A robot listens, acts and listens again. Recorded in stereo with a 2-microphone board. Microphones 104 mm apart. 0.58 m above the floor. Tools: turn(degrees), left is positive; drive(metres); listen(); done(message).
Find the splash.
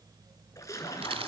turn(degrees=30)
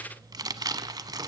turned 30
listen()
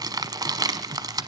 done("I heard a splash, but can't make it out now. It was about straight ahead or 120° left.")